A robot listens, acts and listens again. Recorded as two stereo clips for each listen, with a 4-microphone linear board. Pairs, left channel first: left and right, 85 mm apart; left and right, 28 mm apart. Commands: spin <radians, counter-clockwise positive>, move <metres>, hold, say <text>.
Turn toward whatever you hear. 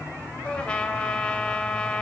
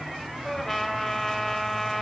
spin 0.52
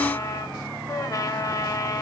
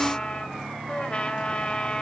spin 2.36
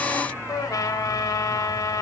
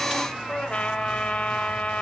spin 0.79
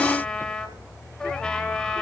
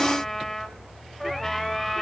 spin 0.17
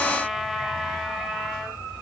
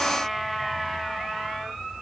say Found it: a trumpet, straight ahead.